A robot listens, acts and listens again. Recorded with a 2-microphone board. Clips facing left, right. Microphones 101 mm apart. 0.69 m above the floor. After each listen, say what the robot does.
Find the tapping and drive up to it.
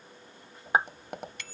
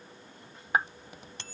Turn 65° left.
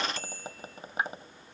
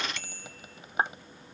Turn 40° left.
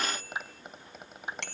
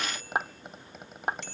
Drive 1.0 m forward.
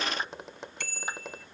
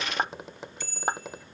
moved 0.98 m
Drive 1.0 m forward.
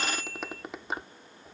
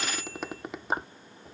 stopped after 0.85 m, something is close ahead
Arrived at the tapping, straight ahead.